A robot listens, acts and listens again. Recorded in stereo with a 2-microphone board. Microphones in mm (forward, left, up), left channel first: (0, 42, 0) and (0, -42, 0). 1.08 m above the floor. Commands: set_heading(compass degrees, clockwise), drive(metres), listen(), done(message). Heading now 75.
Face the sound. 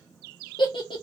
set_heading(0)
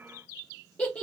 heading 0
set_heading(345)
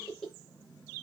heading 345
done("Facing the giggle.")